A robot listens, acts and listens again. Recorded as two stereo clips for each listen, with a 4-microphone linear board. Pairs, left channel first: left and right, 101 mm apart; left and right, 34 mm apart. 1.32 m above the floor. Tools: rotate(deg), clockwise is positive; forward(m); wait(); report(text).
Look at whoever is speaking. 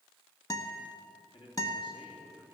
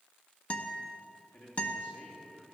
rotate(-55)
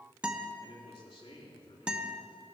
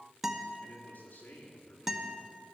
rotate(-65)
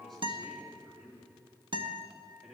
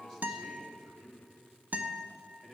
report("Found it: a man speaking, straight ahead.")